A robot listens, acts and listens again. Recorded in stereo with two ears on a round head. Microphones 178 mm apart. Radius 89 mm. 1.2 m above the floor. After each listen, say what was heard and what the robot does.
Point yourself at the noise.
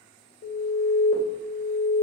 The alarm: about 60° left or 120° left. Turn 60° left.
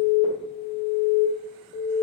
So it is at 55° left. Turn 55° left.
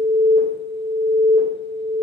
The alarm is now 15° right. Turn 15° right.
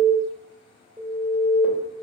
Facing the alarm, 1 to 2 m away.